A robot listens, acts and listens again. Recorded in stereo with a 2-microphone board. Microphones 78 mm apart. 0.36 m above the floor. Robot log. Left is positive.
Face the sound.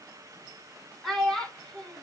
cmd yaw +30
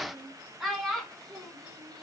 cmd yaw +30
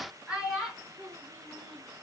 end: Found it: a child speaking, straight ahead.